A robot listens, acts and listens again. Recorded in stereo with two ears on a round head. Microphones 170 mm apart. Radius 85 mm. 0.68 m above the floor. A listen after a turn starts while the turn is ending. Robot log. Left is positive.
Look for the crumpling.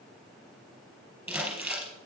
cmd yaw -30
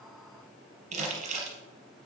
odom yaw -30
note: So it is at 140° right.
cmd yaw -140
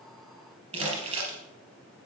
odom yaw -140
note: The crumpling is now 35° right.
cmd yaw -35
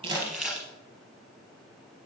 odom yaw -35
end: Found it: crumpling, straight ahead.